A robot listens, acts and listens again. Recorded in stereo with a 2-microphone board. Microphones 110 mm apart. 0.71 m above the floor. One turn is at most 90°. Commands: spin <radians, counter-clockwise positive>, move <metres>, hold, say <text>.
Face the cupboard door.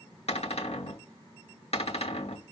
spin 1.22
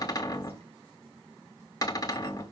spin 0.61
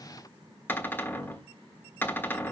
spin 0.35
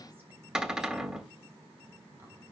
say Found it: a cupboard door, straight ahead.